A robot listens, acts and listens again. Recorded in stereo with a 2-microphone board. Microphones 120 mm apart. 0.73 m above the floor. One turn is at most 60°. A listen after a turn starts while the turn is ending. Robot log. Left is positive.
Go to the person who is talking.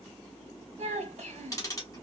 note: The child speaking: about 65° right or 115° right.
cmd yaw -60
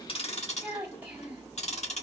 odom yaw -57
note: So it is at 10° right.
cmd yaw -10
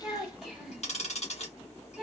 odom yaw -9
cmd fwd 1.0
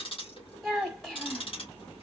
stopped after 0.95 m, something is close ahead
end: Arrived at the child speaking, straight ahead.